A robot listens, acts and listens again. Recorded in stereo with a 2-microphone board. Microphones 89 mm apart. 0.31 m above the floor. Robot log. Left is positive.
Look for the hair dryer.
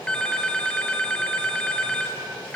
cmd idle
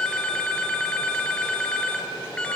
cmd idle
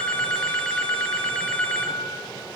end: I can't make out a hair dryer, only a phone ringing.